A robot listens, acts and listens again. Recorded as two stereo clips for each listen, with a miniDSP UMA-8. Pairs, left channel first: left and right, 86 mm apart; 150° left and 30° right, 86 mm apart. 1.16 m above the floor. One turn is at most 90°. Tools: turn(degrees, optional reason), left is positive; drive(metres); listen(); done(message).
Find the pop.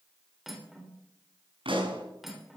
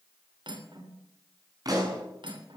turn(degrees=-75, reason="The pop: 75° right.")
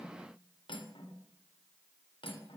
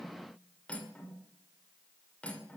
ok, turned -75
done("I heard a pop from this way, but can't make it out now.")